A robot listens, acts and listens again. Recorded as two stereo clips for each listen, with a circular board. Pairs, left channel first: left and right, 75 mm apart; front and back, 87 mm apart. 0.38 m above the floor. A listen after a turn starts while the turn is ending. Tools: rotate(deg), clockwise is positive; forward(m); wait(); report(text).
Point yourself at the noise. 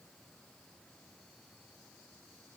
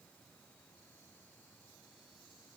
wait()
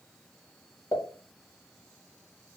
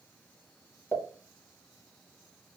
rotate(-65)
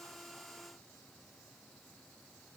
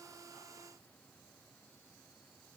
report("Facing where the pop came from. I can't hear it now.")